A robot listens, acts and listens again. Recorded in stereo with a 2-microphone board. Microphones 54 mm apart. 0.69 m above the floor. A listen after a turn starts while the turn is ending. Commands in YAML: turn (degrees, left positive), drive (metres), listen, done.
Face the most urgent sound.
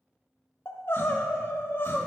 turn: 50
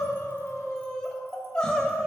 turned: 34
turn: 15
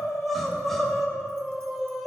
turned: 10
done: "Facing the crying, under 1 m away."